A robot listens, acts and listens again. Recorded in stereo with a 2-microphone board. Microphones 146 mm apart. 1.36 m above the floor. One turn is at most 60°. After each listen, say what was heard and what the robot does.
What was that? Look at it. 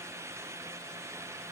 Keep listening.
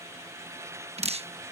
The dripping: about 50° right or 130° right. Turn 50° right.
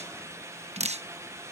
So it is at 65° right. Turn 60° right.
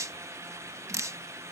The dripping is now 25° right. Turn 25° right.
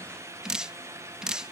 Facing the dripping.